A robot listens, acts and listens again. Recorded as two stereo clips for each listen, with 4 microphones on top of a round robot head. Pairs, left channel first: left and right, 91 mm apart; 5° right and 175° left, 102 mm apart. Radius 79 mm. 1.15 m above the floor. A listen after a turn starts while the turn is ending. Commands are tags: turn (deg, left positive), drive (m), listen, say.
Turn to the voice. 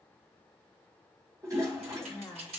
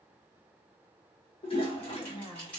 <turn deg="20"/>
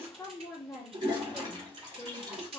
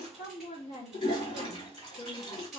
<say>Facing the woman speaking, 1 to 2 m away.</say>